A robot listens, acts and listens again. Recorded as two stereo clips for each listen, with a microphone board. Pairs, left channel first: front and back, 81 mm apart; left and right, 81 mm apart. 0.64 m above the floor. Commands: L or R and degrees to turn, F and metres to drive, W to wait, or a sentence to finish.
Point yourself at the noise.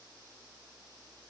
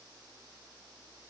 W
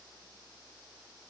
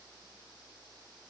W
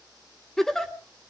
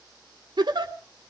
R85
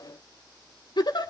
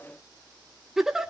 Found it: a giggle, straight ahead, 1 to 2 m away.